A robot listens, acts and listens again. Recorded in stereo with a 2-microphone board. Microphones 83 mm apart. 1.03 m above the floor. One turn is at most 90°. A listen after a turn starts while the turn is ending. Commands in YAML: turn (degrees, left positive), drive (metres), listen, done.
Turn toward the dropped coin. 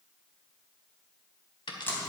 turn: 90
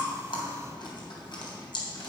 done: "I heard a dropped coin from this way, but can't make it out now."